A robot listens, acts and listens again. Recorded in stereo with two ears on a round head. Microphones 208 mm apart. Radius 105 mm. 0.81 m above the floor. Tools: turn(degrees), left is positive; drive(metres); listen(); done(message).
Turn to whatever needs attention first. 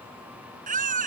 turn(degrees=-35)
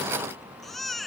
done("Facing the baby crying.")